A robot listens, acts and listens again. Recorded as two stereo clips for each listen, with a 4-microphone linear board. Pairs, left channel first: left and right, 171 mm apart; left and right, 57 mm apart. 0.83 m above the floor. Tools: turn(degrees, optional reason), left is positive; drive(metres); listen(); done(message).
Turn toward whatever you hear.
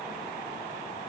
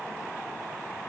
listen()
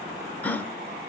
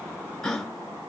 turn(degrees=30)
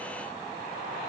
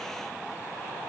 listen()
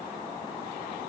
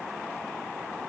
done("I heard a gasp, but can't make it out now. It was about 20° right or 140° left.")